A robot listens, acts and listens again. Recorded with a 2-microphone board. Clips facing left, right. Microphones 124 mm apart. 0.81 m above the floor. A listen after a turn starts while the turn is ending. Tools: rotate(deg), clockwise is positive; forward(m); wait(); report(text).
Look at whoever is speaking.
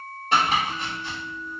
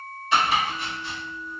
wait()
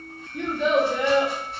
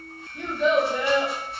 rotate(-65)
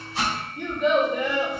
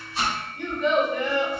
rotate(-20)
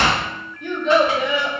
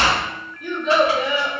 report("Found it: a child speaking, straight ahead, 1 to 2 m away.")